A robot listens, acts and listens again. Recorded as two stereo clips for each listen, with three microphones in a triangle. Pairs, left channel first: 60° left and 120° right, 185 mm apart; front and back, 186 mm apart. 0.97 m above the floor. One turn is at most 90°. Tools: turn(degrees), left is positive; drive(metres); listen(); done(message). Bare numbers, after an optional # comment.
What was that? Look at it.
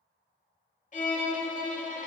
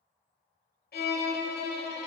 # The violin: 15° left.
turn(15)
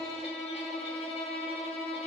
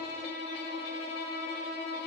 done("Found it: a violin, straight ahead, 1 to 2 m away.")